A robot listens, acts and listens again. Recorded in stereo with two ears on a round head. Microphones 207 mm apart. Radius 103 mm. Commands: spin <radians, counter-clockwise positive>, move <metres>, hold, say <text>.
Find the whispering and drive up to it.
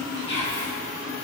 spin 0.87
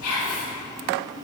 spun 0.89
spin 1.40
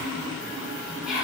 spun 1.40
move 1.0
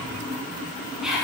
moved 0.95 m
move 1.0
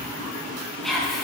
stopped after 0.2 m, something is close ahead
say Arrived at the whispering, straight ahead.